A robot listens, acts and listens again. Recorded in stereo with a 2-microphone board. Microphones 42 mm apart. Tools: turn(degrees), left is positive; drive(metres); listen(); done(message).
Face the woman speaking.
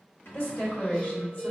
turn(degrees=55)
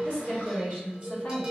turn(degrees=50)
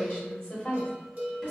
turn(degrees=30)
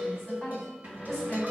turn(degrees=10)
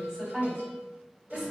done("Found it: a woman speaking, straight ahead, 2 to 4 m away.")